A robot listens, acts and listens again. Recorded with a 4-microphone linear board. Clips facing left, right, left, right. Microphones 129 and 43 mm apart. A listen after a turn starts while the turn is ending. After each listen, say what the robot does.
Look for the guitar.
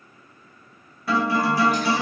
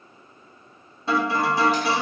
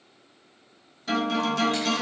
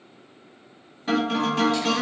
Turn 25° right.
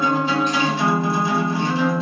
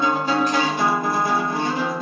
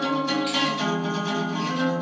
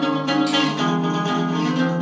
Turn 130° right.
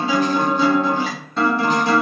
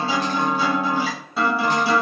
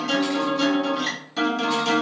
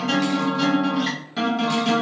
Turn 10° right.
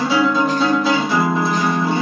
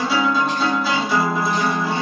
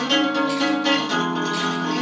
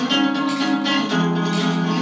Facing the guitar.